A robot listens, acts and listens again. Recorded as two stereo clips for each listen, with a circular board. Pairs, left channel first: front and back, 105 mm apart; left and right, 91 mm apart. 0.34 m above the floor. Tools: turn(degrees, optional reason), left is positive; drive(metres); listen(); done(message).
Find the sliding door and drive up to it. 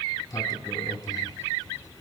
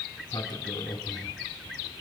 turn(degrees=50, reason="The sliding door: 50° left.")
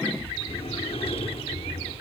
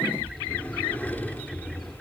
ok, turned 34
turn(degrees=15, reason="The sliding door is now 15° left.")
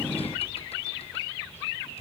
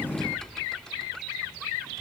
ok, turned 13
drive(metres=1.0)
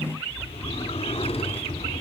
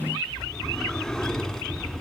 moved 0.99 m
drive(metres=1.0)
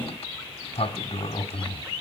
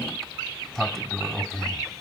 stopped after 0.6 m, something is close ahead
done("Arrived at the sliding door, straight ahead.")